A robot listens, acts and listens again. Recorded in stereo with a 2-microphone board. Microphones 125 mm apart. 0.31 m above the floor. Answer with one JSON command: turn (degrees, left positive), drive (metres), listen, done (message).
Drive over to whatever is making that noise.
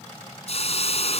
{"turn": 55}
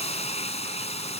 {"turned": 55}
{"turn": 65}
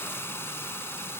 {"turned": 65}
{"turn": 20}
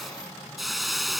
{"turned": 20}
{"drive": 1.0}
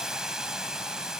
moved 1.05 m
{"drive": 1.0}
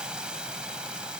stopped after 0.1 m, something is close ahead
{"turn": -10}
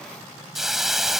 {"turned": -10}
{"done": "Arrived at the hiss, straight ahead."}